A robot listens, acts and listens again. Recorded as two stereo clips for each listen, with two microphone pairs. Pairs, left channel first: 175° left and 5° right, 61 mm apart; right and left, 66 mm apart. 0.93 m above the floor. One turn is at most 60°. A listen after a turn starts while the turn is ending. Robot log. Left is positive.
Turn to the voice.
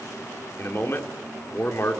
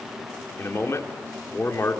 note: The man speaking: 140° right.
cmd yaw -60
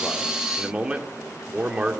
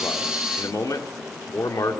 note: The man speaking is now 75° right.
cmd yaw -60
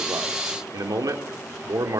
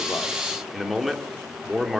end: Found it: a man speaking, straight ahead.